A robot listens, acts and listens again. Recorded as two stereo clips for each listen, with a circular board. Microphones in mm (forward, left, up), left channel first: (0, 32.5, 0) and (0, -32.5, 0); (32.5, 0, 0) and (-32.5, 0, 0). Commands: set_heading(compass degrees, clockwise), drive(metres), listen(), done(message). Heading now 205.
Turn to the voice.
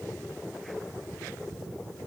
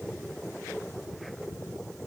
listen()
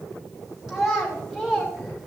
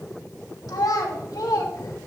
done("Facing the child speaking, 1 to 2 m away.")